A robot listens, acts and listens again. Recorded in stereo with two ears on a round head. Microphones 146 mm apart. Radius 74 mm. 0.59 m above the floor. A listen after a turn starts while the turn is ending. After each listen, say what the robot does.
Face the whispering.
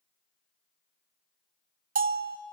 Keep listening.
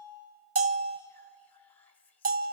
Turn 30° left.
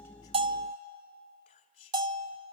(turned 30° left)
Turn 140° left.
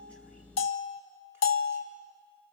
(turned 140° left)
Keep listening.
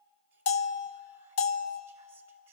Keep listening.
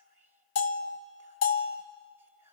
Turn 15° right.
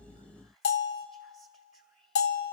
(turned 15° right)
Facing the whispering.